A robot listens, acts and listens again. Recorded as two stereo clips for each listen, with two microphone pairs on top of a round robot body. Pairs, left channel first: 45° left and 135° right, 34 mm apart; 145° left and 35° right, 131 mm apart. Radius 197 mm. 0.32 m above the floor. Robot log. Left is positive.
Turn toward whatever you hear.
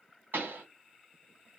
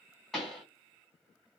note: The pop: 125° right.
cmd yaw -125
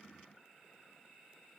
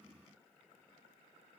end: I heard a pop from this way, but can't make it out now.